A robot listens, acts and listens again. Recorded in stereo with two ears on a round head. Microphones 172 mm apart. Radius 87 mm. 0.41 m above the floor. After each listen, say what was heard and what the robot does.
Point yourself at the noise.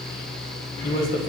The man speaking: about 45° left or 135° left. Turn 45° left.
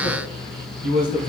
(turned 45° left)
So it is at 30° left. Turn 30° left.
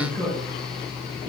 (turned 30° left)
The man speaking is now 10° left. Turn 10° left.
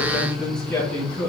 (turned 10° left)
Found it: a man speaking, straight ahead, 2 to 4 m away.